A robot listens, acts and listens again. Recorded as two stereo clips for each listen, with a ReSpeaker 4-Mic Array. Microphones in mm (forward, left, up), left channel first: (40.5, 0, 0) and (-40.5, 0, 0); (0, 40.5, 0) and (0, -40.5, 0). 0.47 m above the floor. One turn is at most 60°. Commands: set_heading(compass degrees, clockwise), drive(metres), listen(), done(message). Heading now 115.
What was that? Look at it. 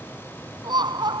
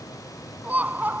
set_heading(175)
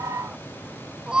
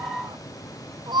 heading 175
set_heading(235)
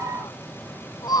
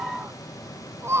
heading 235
set_heading(265)
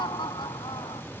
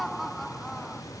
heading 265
done("Found it: laughter, straight ahead.")